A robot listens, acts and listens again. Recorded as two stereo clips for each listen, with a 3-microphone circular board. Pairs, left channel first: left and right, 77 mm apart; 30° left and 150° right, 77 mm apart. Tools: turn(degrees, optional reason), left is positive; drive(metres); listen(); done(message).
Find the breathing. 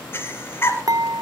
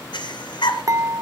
turn(degrees=30, reason="The breathing: 30° left.")
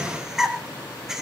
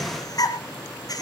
done("Facing the breathing, 1 to 2 m away.")